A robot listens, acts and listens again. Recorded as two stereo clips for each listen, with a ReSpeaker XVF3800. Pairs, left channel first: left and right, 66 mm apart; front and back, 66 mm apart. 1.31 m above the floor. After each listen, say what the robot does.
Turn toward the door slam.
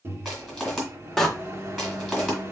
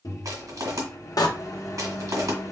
Facing the door slam.